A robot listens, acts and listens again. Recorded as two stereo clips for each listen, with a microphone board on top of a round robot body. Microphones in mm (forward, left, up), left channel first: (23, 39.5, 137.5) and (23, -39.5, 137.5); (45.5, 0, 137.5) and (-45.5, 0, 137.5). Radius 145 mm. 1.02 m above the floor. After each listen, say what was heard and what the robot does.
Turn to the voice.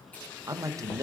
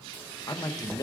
The man speaking: 45° right. Turn 45° right.
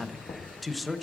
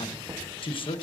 Found it: a man speaking, straight ahead.